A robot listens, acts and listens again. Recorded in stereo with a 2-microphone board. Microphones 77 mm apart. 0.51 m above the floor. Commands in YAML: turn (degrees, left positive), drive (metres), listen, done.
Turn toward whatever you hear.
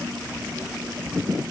listen: true
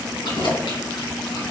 turn: 75
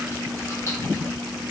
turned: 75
listen: true
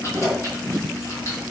turn: 40
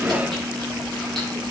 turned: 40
turn: 10
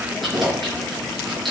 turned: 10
done: "Found it: keys jangling, straight ahead."